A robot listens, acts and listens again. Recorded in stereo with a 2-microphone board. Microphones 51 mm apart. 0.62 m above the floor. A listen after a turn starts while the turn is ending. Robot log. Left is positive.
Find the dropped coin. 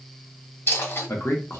note: The dropped coin: about 55° left or 125° left.
cmd yaw +55
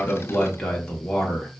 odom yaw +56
cmd idle
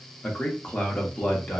end: I heard a dropped coin, but can't make it out now. It was about straight ahead or 70° left.